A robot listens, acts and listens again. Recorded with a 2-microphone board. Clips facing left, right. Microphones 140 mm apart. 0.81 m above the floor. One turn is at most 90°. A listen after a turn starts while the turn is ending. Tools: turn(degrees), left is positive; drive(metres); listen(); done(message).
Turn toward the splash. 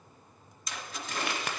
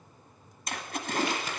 turn(degrees=-55)
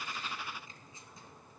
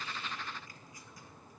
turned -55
listen()
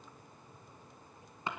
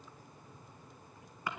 done("I heard a splash, but can't make it out now. It was about straight ahead or 70° right.")